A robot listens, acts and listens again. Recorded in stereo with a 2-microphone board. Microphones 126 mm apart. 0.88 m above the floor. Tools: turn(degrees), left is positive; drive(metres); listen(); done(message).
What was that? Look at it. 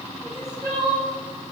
turn(degrees=-35)
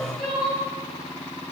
done("Facing the crying, 2 to 4 m away.")